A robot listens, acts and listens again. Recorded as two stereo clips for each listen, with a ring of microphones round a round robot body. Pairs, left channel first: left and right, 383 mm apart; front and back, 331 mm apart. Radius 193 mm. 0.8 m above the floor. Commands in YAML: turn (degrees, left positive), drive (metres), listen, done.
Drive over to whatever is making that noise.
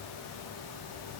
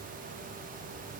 listen: true
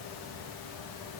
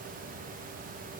listen: true
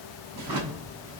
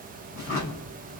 turn: -60
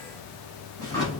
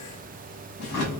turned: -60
turn: 10
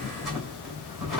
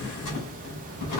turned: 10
drive: 1.0
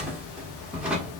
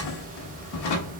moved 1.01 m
drive: 1.0
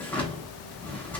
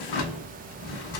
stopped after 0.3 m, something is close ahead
done: "I am next to the drawer."